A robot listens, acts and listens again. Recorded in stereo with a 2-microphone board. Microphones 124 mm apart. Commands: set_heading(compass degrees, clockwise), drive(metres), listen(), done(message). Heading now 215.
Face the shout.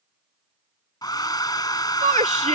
set_heading(285)
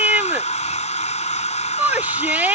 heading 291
set_heading(306)
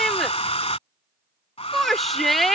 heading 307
done("Found it: a shout, straight ahead.")